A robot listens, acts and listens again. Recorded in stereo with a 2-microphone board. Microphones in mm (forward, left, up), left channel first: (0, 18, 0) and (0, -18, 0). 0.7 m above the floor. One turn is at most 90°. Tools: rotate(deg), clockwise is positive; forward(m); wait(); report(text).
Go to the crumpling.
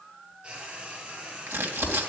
rotate(90)
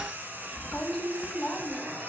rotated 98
rotate(-15)
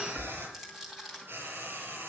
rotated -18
forward(1.0)
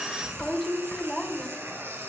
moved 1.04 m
forward(1.0)
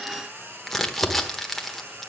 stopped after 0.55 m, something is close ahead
rotate(-10)
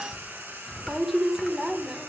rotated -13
report("I am next to the crumpling.")